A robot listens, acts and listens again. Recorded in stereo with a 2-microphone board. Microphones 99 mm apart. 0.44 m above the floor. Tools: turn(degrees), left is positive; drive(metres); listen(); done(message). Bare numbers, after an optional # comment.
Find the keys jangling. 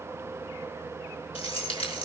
turn(90)
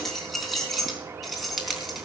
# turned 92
done("Found it: keys jangling, straight ahead, 2 to 4 m away.")